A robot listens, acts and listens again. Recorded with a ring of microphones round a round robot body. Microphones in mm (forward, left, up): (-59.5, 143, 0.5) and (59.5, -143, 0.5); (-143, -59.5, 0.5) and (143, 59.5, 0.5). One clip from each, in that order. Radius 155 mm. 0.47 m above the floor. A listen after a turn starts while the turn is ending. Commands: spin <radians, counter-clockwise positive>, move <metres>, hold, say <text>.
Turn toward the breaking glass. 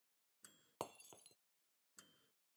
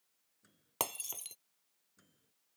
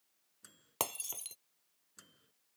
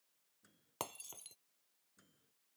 spin -1.57
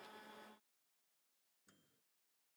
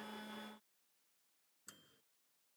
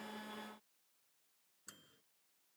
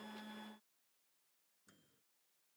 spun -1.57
say Facing where the breaking glass came from. I can't hear it now.